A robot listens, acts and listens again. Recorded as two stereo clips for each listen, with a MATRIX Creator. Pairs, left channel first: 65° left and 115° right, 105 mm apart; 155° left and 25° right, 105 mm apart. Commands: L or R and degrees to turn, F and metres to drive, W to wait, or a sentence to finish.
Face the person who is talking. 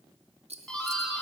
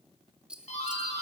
W
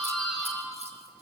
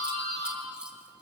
W
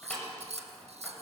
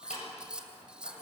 I can't make out anyone speaking, only scissors and a doorbell.